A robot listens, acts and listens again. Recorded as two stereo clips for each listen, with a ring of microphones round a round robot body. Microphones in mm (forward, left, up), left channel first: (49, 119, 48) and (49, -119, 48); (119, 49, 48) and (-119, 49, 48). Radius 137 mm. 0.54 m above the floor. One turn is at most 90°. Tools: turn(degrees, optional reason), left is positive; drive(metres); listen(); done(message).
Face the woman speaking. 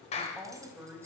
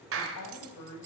turn(degrees=-10, reason="The woman speaking: 10° right.")
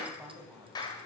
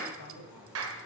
turn(degrees=-10, reason="The woman speaking is now 10° right.")
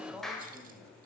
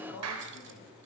done("Facing the woman speaking, 2 to 4 m away.")